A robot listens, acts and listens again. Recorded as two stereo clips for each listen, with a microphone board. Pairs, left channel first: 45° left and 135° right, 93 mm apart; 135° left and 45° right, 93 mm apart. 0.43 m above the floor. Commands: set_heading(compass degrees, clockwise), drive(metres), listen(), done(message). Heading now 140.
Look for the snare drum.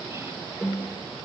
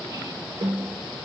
set_heading(190)
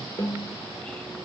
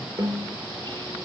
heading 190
done("Found it: a snare drum, straight ahead, over 4 m away.")